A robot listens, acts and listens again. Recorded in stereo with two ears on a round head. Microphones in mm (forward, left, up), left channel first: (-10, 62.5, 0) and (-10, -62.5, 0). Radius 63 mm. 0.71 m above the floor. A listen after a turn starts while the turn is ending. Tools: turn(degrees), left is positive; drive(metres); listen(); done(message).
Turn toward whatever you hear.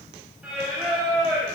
turn(degrees=-30)
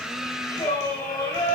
turn(degrees=25)
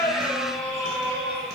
done("Found it: singing, straight ahead.")